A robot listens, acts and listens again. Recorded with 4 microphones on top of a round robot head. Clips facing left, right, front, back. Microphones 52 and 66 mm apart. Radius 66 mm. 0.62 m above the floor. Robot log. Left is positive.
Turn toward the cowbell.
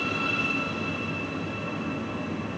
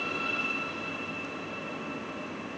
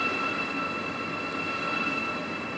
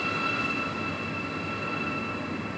cmd idle
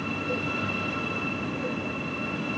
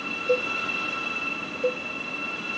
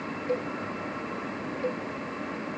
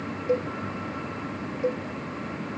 note: The cowbell: 105° right.
cmd yaw -105
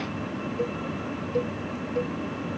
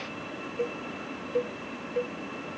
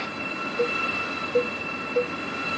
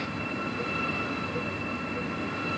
end: Found it: a cowbell, straight ahead.